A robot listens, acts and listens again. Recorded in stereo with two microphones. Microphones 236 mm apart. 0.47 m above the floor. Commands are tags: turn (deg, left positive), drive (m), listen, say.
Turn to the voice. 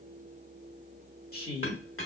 <turn deg="40"/>
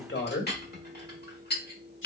<turn deg="90"/>
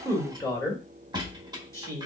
<turn deg="15"/>
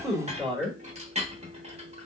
<say>Found it: a woman speaking, straight ahead, 1 to 2 m away.</say>